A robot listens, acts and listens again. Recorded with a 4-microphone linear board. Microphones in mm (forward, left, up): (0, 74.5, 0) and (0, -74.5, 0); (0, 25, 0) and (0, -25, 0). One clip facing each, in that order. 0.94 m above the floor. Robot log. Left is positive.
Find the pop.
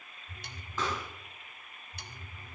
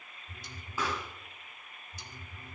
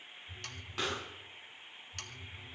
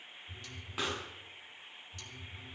cmd yaw -30
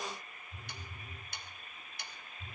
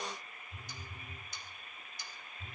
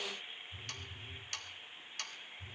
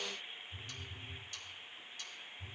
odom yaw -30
cmd idle
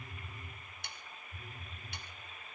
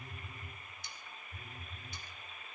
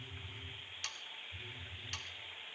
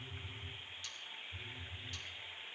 end: I heard a pop, but can't make it out now. It was about 20° left or 140° right.